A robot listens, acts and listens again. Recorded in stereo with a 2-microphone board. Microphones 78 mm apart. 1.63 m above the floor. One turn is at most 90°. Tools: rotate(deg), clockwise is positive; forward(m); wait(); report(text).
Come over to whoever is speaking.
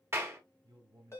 rotate(65)
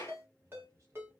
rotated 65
rotate(45)
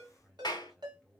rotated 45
forward(1.0)
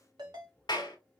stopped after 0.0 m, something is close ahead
wait()
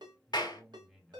report("Something is in my way. I am facing the man speaking but have not reached it.")